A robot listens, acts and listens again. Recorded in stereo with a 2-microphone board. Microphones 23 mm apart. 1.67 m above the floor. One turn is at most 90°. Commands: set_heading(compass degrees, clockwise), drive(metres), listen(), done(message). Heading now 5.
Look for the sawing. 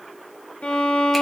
listen()
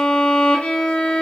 listen()
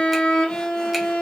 done("I can't make out sawing to turn to.")